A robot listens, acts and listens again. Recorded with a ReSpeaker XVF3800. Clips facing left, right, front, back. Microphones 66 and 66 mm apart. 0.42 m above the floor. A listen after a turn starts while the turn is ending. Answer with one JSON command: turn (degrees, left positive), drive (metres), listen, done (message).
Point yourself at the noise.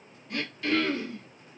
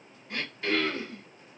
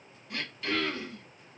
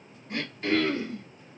{"turn": -140}
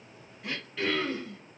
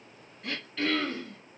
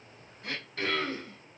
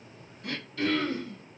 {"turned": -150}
{"turn": 10}
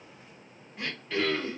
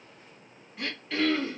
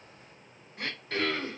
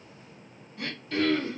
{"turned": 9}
{"done": "Facing the throat clearing."}